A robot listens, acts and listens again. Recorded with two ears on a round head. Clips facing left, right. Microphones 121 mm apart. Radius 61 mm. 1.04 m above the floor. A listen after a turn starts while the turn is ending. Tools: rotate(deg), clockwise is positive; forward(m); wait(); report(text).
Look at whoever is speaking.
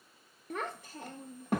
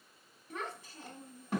rotate(-45)
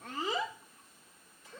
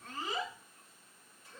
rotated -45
rotate(-80)
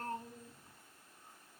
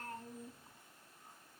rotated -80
wait()
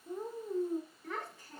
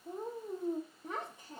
rotate(20)
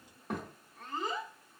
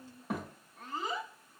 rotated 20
report("Found it: a child speaking, straight ahead.")